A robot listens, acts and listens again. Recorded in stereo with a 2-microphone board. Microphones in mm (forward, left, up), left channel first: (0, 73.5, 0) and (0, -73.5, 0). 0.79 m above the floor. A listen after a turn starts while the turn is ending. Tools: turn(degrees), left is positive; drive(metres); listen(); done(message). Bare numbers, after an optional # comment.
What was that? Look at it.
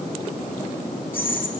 turn(30)
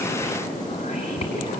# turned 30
# So it is at 135° left.
turn(135)
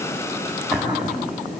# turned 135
done("Found it: whispering, straight ahead.")